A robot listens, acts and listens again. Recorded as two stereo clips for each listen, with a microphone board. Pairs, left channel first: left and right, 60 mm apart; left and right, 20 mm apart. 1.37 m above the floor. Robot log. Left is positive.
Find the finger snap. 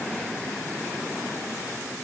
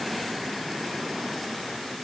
cmd idle
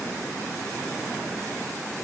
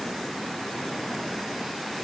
cmd idle
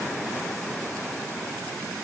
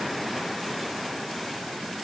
end: I can't make out a finger snap to turn to.